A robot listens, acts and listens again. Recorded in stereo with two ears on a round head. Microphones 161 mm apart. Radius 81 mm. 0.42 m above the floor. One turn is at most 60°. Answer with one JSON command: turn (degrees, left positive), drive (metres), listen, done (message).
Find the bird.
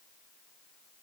{"listen": true}
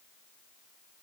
{"listen": true}
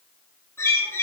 {"turn": 30}
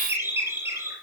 {"turn": -15}
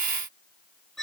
{"done": "Facing the bird."}